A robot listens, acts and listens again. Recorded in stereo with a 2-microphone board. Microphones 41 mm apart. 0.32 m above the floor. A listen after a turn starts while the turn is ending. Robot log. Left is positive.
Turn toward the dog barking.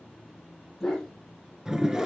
cmd yaw +30
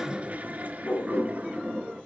note: So it is at 135° left.
cmd yaw +135
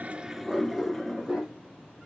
note: The dog barking is now 10° right.
cmd yaw -10
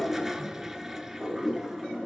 end: Found it: a dog barking, straight ahead.